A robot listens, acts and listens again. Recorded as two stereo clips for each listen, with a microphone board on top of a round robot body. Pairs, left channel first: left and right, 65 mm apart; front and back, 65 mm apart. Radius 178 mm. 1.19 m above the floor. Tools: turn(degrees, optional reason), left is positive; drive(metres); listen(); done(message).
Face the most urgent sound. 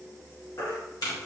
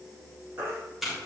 turn(degrees=130, reason="The baby crying: 130° left.")
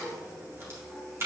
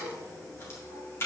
listen()
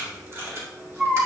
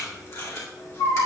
turn(degrees=-10, reason="The baby crying is now 10° right.")
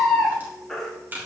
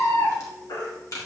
done("Facing the baby crying, 2 to 4 m away.")